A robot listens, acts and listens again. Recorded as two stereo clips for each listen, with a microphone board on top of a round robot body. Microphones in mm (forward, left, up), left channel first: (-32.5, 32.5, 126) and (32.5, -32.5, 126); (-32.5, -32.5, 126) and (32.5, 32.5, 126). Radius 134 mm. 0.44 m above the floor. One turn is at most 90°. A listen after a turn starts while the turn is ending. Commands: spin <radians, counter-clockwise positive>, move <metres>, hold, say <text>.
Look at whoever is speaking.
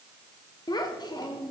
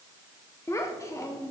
spin 1.57
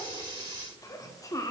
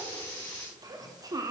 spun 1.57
spin 1.48
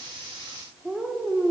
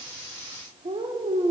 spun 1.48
spin 0.61
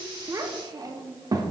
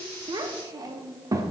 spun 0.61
say Facing the child speaking, under 1 m away.